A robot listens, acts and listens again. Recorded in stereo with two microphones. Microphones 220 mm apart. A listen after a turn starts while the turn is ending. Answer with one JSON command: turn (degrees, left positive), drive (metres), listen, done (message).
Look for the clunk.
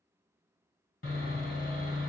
{"listen": true}
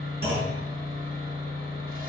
{"turn": -55}
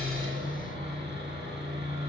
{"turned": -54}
{"listen": true}
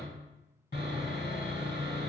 {"done": "I heard a clunk, but can't make it out now. It was about straight ahead or 75° right."}